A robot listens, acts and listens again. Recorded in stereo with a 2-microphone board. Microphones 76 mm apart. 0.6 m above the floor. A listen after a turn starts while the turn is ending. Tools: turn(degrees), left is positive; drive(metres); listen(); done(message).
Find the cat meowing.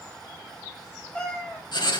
turn(degrees=15)
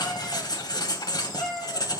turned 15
turn(degrees=30)
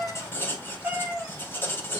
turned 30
turn(degrees=-15)
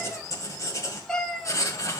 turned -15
turn(degrees=10)
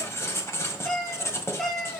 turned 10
done("Found it: a cat meowing, straight ahead.")